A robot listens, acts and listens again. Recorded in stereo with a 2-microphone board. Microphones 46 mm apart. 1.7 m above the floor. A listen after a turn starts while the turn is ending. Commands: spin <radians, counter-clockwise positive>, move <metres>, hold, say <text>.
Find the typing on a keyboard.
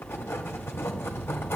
hold
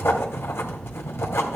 hold
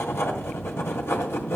say I can't make out typing on a keyboard, only writing.